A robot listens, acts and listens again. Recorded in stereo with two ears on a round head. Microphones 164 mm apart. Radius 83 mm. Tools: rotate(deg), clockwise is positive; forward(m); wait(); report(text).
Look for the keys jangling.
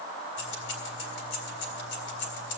rotate(-70)
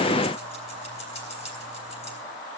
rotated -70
rotate(-35)
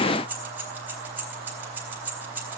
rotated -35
rotate(10)
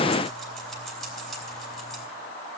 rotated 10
report("Found it: keys jangling, straight ahead, 2 to 4 m away.")